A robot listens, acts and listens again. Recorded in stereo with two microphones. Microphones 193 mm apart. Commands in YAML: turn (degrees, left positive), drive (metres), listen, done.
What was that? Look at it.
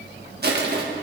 turn: -55
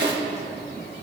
turn: -65
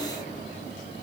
listen: true
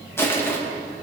turn: 10
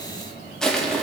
done: "Found it: crushing, straight ahead."